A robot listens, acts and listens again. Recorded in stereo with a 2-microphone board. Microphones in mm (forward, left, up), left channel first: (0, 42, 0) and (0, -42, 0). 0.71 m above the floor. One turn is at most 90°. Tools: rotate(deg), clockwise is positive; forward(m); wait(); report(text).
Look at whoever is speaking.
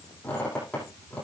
wait()
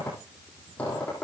wait()
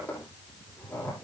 report("I can't make out anyone speaking to turn to.")